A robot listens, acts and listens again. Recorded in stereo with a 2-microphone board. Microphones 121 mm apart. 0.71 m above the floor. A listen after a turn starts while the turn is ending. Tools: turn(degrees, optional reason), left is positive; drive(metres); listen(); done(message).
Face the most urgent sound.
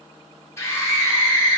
turn(degrees=20, reason="The scream: about 20° left or 160° left.")
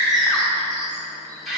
done("Facing the scream.")